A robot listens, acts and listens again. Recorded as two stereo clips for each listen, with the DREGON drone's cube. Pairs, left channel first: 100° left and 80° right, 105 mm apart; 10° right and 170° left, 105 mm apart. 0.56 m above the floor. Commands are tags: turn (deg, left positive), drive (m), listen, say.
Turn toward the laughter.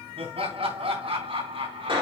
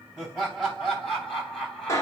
<turn deg="-95"/>
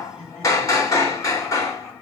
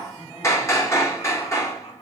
<turn deg="15"/>
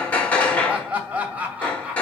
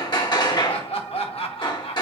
<say>Facing the laughter, 2 to 4 m away.</say>